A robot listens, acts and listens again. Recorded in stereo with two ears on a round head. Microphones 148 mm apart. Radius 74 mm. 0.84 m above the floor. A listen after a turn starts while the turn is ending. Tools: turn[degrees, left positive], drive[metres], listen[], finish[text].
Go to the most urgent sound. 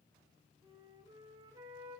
Action: listen[]
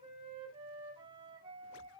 Action: listen[]
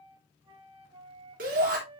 Thought: The shout: about 55° right or 125° right.
Action: turn[-55]
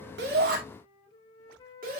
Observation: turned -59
Thought: So it is at 60° right.
Action: turn[-60]
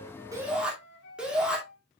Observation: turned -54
Action: drive[1.0]
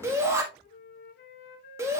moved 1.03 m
Thought: The shout is now 20° right.
Action: turn[-20]
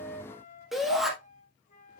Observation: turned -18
Action: drive[1.0]
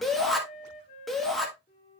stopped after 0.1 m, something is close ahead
Action: finish[Arrived at the shout, straight ahead.]